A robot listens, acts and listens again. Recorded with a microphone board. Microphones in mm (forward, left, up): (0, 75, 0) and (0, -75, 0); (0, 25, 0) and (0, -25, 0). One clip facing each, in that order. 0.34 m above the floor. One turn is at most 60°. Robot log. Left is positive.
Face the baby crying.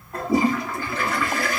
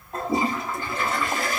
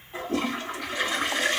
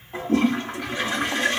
cmd idle
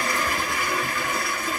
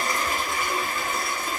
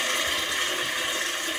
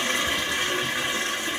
cmd idle
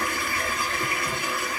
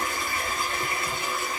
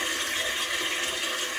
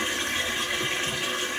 end: I can't make out a baby crying to turn to.